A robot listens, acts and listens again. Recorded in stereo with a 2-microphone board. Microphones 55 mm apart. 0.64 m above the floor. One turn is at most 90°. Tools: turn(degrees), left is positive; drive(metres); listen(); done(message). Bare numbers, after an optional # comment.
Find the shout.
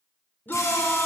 # The shout: about 35° left or 145° left.
turn(35)
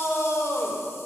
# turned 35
# So it is at 105° left.
turn(90)
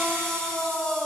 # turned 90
# The shout is now 10° left.
turn(10)
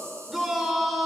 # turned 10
done("Found it: a shout, straight ahead.")